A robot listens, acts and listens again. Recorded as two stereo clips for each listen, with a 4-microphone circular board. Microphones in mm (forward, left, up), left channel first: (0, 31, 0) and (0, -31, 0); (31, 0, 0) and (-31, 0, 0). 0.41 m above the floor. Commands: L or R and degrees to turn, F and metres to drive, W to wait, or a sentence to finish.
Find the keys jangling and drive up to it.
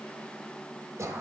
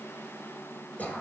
W
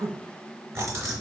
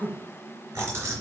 R135
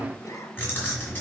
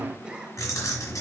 L35
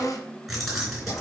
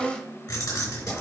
F1.0
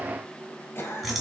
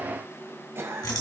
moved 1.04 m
F1.0
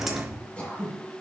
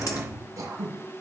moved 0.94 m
F1.0
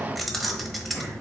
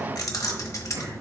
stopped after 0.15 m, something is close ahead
I am next to the keys jangling.